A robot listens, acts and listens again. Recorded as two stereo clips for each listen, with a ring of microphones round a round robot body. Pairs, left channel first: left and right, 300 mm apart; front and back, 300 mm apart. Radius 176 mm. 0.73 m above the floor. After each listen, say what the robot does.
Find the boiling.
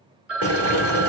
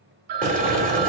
Turn 120° right.
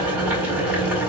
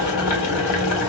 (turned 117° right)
Found it: boiling, straight ahead, 1 to 2 m away.